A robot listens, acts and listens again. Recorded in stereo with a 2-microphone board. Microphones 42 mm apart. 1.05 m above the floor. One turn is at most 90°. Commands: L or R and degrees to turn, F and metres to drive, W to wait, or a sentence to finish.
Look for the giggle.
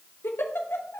L70
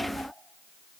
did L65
W
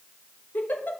L45
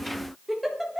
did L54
Facing the giggle.